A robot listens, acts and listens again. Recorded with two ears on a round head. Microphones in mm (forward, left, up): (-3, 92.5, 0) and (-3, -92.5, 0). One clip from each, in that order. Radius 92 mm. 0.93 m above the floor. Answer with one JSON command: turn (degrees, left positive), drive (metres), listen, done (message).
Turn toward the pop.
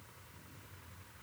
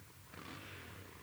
{"listen": true}
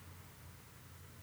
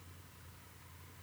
{"listen": true}
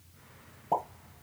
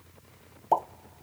{"turn": -65}
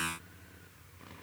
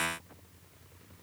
{"listen": true}
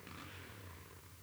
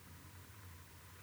{"done": "I heard a pop, but can't make it out now. It was about straight ahead or 50° right."}